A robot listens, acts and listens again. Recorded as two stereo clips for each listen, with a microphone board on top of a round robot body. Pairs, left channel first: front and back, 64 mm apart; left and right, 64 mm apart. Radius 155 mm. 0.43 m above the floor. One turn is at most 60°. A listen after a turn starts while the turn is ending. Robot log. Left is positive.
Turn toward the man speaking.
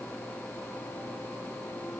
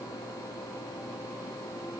cmd idle
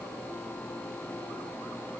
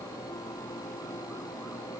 cmd idle
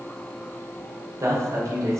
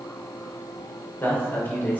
note: The man speaking: 150° left.
cmd yaw +60
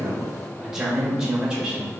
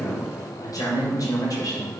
note: The man speaking is now 105° left.
cmd yaw +60
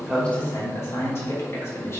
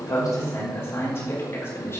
note: The man speaking is now 45° left.
cmd yaw +45
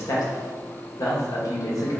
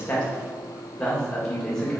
note: The man speaking is now 10° left.
cmd yaw +10
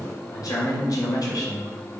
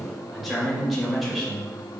end: Facing the man speaking, 2 to 4 m away.